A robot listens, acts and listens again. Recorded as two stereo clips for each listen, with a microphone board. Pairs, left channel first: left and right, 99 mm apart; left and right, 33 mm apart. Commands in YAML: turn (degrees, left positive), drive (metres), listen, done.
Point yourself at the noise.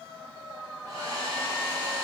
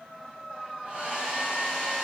turn: -40
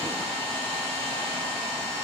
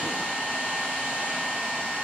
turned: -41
turn: -100
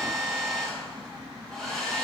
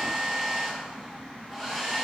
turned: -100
done: "Found it: a hair dryer, straight ahead."